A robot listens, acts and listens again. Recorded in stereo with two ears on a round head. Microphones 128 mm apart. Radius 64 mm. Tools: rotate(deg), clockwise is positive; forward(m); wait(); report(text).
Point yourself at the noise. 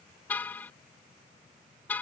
rotate(-30)
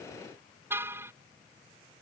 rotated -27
rotate(15)
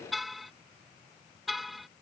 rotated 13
report("Facing the car horn.")